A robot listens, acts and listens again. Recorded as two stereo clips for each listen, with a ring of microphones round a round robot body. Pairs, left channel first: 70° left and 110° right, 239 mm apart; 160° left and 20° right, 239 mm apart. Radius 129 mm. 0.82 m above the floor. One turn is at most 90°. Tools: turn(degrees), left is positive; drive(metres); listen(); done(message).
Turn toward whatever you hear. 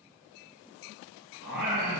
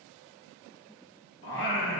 turn(degrees=-90)
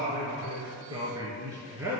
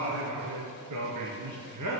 turn(degrees=-30)
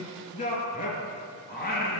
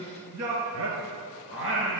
turn(degrees=15)
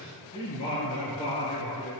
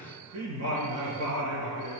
done("Found it: singing, straight ahead.")